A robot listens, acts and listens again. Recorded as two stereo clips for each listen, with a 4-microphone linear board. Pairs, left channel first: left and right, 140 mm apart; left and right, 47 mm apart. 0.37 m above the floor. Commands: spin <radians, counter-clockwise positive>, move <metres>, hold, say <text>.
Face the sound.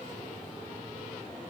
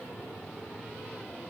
hold
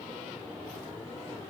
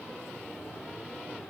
hold
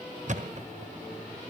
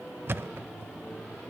spin -0.96
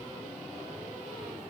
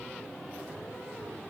hold
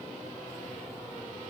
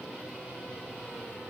say I heard a thud, but can't make it out now. It was about straight ahead or 70° right.